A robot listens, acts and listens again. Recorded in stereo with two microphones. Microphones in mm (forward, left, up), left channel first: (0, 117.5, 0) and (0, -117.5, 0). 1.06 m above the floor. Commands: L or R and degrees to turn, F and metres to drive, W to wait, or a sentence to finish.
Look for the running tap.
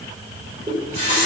R30
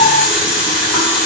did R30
Facing the running tap, 2 to 4 m away.